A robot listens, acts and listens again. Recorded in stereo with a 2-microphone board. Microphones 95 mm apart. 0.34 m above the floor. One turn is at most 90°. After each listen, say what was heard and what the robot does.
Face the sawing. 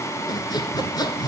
The sawing: about 45° left or 135° left. Turn 45° left.
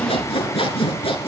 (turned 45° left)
So it is at 90° left. Turn 90° left.
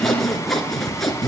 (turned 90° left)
Found it: sawing, straight ahead, 1 to 2 m away.